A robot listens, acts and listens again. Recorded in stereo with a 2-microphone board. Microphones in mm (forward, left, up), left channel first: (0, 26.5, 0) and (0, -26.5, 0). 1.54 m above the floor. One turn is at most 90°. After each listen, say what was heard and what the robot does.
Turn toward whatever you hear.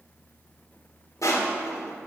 Turn 90° left.
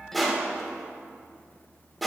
Facing the crushing, 1 to 2 m away.